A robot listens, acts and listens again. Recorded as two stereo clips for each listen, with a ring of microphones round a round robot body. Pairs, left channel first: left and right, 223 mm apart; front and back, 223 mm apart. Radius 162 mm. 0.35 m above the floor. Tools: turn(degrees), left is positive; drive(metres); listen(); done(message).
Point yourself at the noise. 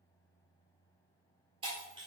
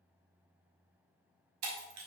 turn(degrees=-165)
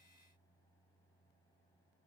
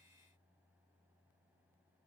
done("I heard breaking glass from this way, but can't make it out now.")